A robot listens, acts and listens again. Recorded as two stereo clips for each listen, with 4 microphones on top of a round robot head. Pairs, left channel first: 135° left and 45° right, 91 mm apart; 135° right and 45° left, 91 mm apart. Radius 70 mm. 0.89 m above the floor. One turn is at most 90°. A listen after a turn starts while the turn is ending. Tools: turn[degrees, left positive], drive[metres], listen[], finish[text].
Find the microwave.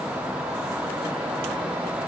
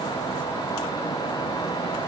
Action: listen[]
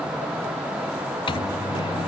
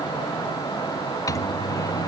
Thought: The microwave: 170° left.
Action: turn[90]
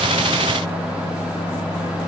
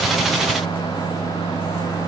Thought: The microwave is now 90° left.
Action: turn[90]
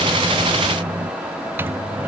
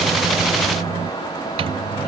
Thought: The microwave is now 25° left.
Action: turn[25]
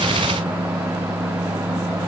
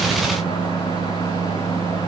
Thought: The microwave is now 10° left.
Action: turn[10]
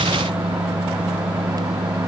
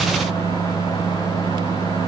Action: finish[Facing the microwave.]